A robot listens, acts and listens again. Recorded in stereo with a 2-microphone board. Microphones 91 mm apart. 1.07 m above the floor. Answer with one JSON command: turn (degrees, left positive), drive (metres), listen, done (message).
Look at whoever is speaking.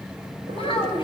{"turn": 65}
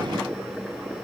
{"listen": true}
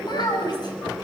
{"turn": 50}
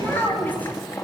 {"turn": 20}
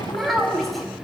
{"done": "Facing the child speaking, over 4 m away."}